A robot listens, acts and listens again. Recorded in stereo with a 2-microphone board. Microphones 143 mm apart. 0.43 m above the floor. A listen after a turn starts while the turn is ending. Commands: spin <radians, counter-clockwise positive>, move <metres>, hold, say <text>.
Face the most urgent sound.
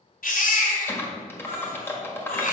spin 1.57
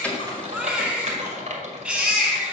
say Found it: a baby crying, straight ahead, 2 to 4 m away.